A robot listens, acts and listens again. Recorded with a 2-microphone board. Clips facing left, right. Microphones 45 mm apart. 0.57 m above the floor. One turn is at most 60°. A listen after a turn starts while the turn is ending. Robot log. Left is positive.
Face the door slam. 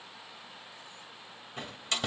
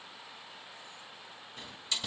note: The door slam: about 60° left or 120° left.
cmd yaw +60
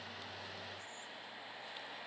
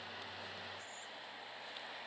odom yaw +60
cmd idle
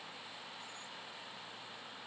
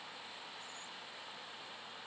end: I heard a door slam, but can't make it out now. It was about straight ahead or 60° left.